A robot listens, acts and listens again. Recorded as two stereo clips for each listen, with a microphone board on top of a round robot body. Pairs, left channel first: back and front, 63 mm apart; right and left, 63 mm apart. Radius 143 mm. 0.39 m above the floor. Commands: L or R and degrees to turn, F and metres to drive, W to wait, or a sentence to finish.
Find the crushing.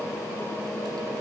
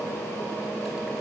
W
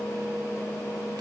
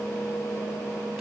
W
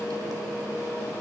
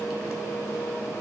I can't make out crushing to turn to.